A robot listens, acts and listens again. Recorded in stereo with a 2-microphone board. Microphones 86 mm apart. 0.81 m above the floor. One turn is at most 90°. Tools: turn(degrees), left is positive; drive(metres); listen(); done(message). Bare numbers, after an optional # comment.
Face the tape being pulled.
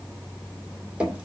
listen()
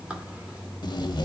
# The tape being pulled: about 55° left or 125° left.
turn(55)
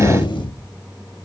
# So it is at 70° left.
turn(70)
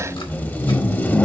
# The tape being pulled is now 20° left.
turn(20)
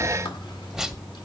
done("Found it: tape being pulled, straight ahead.")